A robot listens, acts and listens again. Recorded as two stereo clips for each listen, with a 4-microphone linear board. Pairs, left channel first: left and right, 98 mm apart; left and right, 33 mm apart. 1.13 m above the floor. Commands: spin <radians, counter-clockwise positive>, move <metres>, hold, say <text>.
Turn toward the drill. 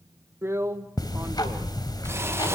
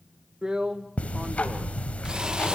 spin -0.44
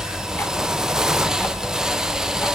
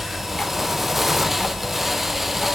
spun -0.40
say Found it: a drill, straight ahead.